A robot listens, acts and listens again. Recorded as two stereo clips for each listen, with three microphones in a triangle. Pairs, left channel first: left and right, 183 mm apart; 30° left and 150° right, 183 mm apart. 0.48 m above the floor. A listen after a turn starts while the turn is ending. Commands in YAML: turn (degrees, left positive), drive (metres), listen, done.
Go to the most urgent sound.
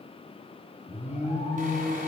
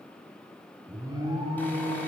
turn: 140
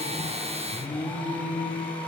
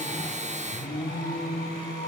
drive: 1.0
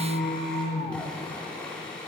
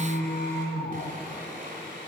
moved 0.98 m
drive: 1.0
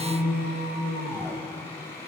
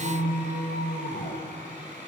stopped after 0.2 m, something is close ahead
turn: -10
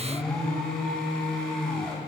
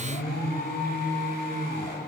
done: "Arrived at the alarm, straight ahead."